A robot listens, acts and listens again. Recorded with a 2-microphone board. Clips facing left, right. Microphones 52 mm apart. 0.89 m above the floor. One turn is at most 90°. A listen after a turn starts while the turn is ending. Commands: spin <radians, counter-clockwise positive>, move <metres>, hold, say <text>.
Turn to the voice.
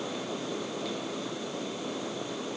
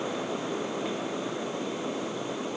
hold
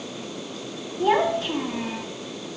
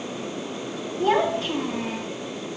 spin 0.52
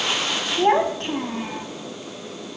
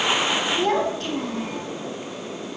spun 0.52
spin 1.57
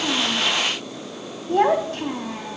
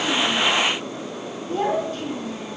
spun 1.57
spin 1.40
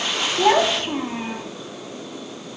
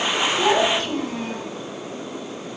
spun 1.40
spin 0.61
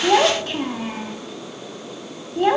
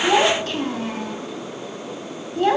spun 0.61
spin 0.26
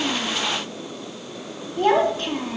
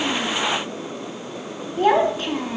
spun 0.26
say Facing the child speaking, 1 to 2 m away.